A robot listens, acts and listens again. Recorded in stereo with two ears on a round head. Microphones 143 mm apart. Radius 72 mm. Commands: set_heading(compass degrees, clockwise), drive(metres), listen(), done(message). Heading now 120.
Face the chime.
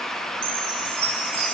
set_heading(210)
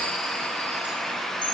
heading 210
listen()
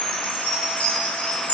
set_heading(200)
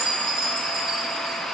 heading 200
done("Found it: a chime, straight ahead, over 4 m away.")